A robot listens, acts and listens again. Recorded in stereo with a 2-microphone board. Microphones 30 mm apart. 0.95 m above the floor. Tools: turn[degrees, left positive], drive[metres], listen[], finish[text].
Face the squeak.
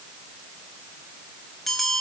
Action: listen[]
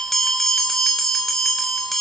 Action: listen[]
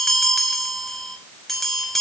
Action: finish[I can't make out a squeak to turn to.]